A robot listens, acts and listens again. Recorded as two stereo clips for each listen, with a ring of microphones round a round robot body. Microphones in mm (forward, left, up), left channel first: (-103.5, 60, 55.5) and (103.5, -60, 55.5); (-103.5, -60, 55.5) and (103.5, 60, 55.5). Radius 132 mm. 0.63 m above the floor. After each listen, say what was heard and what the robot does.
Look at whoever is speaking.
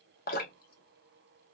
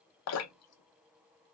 Keep listening.
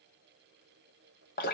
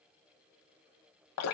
Keep listening.
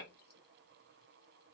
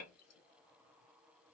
I can't make out anyone speaking to turn to.